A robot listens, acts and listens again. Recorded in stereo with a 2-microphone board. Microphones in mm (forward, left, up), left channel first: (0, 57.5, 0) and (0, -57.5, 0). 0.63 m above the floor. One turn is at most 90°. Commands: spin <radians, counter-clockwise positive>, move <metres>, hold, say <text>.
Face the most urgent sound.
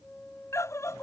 spin 0.44
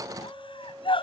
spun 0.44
spin 1.57
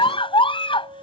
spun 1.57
spin 0.87
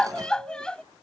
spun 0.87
spin 0.17
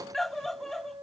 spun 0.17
say Found it: a scream, straight ahead.